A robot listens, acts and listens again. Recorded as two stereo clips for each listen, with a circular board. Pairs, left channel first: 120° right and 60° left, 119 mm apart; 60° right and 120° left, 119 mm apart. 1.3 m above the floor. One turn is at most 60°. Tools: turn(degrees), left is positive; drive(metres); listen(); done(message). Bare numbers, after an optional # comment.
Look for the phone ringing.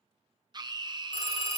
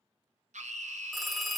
# The phone ringing: 150° right.
turn(-60)
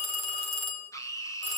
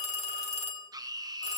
# The phone ringing is now 85° right.
turn(-60)
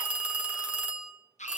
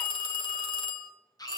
# The phone ringing is now 20° right.
turn(-20)
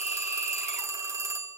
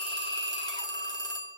done("Found it: a phone ringing, straight ahead, 1 to 2 m away.")